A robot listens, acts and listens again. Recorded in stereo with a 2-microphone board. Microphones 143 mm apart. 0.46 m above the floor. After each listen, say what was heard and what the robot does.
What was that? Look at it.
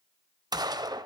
The gunshot: about 25° right or 155° right. Turn 25° right.
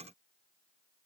Keep listening.
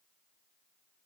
I heard a gunshot, but can't make it out now. It was about straight ahead or 130° right.